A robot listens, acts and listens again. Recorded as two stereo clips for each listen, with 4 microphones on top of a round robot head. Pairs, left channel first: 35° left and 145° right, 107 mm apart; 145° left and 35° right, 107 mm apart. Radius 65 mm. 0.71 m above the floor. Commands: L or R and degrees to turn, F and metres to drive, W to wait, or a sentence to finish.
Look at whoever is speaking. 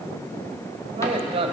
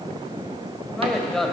R130
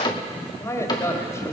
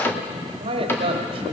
R25
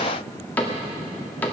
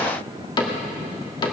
W
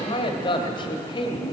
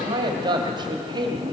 Found it: a man speaking, straight ahead, 1 to 2 m away.